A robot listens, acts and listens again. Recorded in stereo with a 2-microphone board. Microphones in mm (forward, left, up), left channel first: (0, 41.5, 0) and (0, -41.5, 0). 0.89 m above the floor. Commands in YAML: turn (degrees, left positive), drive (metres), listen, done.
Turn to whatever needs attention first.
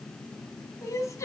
turn: 40
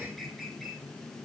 listen: true
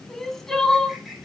done: "Facing the crying."